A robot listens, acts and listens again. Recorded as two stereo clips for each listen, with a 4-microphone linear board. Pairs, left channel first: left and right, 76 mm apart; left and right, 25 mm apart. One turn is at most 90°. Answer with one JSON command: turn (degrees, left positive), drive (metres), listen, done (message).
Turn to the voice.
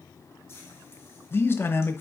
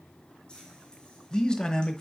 {"turn": 30}
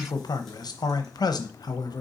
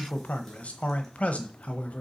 {"turn": 90}
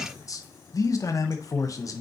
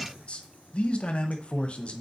{"turn": 45}
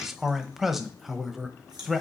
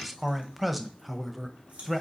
{"done": "Facing the man speaking, under 1 m away."}